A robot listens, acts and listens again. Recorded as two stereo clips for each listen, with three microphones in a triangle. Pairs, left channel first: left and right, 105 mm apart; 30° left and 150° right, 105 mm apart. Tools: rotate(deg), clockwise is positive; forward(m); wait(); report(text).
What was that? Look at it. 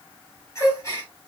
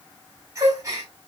rotate(-150)
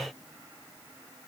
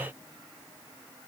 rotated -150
report("Facing where the gasp came from. I can't hear it now.")